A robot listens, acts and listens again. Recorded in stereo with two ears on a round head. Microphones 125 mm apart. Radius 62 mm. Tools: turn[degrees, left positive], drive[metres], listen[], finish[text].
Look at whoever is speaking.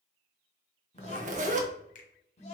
Thought: The child speaking: about 45° left or 135° left.
Action: turn[45]
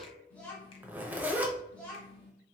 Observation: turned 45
Thought: So it is at 10° left.
Action: turn[10]
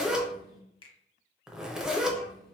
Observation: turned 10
Action: listen[]
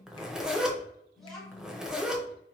Action: finish[Found it: a child speaking, straight ahead.]